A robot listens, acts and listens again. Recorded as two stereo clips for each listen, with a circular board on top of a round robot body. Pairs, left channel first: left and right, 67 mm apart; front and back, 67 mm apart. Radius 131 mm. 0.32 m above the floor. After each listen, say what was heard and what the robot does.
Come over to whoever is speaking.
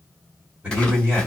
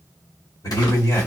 The man speaking: 15° right. Turn 15° right.
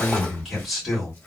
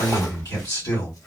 Drive 1.0 m forward.
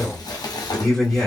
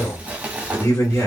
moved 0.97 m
Drive 1.0 m forward.
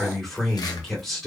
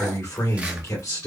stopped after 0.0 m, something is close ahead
I am next to the man speaking.